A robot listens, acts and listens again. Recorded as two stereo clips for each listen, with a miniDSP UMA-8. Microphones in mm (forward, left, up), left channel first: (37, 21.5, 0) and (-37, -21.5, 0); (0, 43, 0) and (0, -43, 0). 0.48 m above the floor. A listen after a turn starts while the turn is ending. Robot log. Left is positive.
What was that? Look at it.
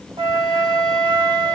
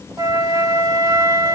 note: The flute: 140° right.
cmd yaw -140
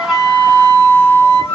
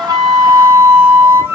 note: The flute is now 25° right.
cmd yaw -25
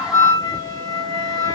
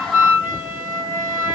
note: The flute is now 15° right.
cmd yaw -15
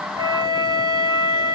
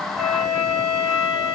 end: Found it: a flute, straight ahead, 1 to 2 m away.